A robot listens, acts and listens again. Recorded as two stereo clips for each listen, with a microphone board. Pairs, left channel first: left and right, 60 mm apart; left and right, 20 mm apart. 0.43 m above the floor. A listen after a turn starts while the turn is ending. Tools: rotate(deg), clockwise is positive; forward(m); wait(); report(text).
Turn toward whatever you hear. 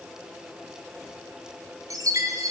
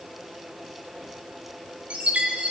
rotate(65)
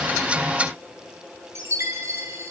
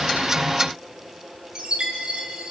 rotate(50)
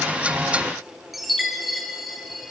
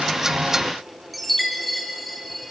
report("Found it: a chime, straight ahead, over 4 m away.")